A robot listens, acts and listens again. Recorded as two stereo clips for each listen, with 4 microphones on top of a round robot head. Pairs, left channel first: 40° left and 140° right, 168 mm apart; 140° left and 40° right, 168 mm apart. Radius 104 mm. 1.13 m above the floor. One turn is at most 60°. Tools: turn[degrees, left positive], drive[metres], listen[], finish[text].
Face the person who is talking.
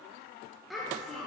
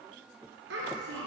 Thought: The child speaking: 50° right.
Action: turn[-50]
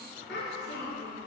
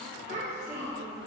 Thought: The child speaking is now 15° left.
Action: turn[15]
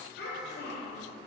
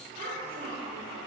Thought: The child speaking is now 10° left.
Action: turn[10]
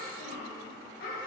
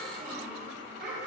Action: finish[Found it: a child speaking, straight ahead, 2 to 4 m away.]